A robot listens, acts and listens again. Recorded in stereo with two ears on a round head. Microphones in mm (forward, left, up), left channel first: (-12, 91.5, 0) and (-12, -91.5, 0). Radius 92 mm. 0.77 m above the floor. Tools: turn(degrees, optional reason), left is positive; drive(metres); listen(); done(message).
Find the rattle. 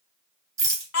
turn(degrees=-15, reason="The rattle: about 15° right or 165° right.")
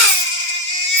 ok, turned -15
listen()
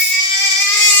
listen()
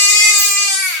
done("I heard a rattle, but can't make it out now. It was about straight ahead or 150° right.")